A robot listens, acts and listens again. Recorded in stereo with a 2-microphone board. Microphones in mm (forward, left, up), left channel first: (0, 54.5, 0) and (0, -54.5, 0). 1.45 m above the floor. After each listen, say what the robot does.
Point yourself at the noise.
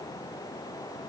Keep listening.
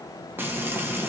Turn 20° right.
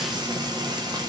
Turn 140° right.
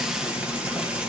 Turn 10° right.
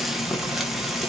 Found it: frying, straight ahead, 1 to 2 m away.